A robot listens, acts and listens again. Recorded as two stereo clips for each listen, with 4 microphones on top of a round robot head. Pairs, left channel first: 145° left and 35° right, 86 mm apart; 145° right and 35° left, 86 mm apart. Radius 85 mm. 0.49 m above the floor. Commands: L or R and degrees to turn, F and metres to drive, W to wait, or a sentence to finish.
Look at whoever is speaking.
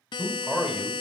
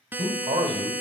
L50
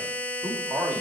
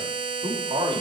L30
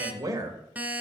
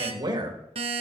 L10
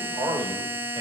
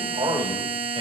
L10
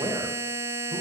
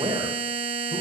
L10
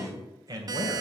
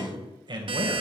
L10
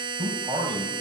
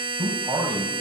Facing the man speaking.